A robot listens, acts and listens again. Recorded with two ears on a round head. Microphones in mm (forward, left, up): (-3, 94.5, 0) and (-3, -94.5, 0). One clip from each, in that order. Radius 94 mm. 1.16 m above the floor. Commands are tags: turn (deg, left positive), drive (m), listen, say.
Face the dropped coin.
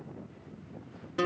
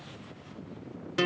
<listen/>
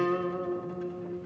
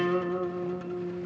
<listen/>
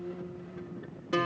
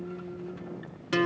<say>I can't make out a dropped coin to turn to.</say>